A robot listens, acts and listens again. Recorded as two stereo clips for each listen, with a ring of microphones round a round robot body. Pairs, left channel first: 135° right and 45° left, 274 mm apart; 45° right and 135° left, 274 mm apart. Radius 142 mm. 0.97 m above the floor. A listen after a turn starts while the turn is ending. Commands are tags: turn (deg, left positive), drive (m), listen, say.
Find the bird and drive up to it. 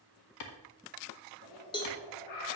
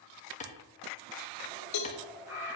<turn deg="-145"/>
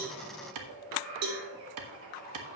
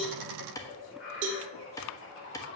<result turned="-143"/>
<drive m="1.0"/>
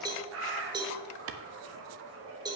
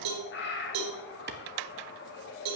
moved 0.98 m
<drive m="1.0"/>
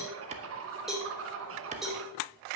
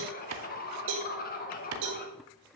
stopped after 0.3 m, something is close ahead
<turn deg="10"/>
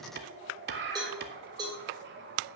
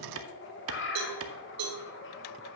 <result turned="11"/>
<say>I am next to the bird.</say>